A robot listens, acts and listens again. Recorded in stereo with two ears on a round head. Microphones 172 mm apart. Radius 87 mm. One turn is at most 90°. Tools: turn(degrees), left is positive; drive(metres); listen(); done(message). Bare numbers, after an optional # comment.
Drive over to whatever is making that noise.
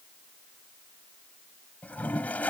turn(30)
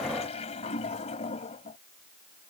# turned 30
# So it is at 140° left.
turn(90)
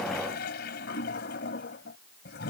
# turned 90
# The toilet flushing is now 60° left.
turn(60)
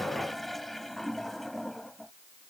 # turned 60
drive(1.0)
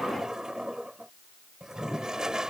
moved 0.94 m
drive(1.0)
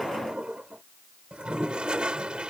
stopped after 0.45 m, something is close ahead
# The toilet flushing is now 10° right.
turn(-10)
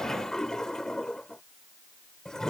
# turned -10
done("Arrived at the toilet flushing, straight ahead.")